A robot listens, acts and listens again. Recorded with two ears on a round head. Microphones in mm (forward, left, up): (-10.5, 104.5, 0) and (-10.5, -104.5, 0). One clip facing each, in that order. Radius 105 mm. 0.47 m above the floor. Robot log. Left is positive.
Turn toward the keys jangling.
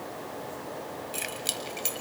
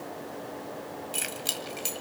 cmd yaw -30
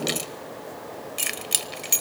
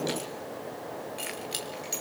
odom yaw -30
note: So it is at 70° left.
cmd yaw +70
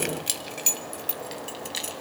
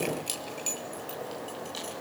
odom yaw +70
note: The keys jangling is now 35° left.
cmd yaw +35
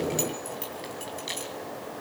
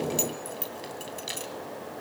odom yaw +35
note: The keys jangling is now 10° right.
cmd yaw -10
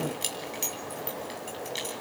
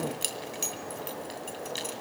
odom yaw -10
note: The keys jangling is now 10° right.
cmd yaw -10
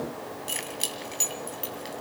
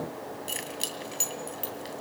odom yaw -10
end: Found it: keys jangling, straight ahead.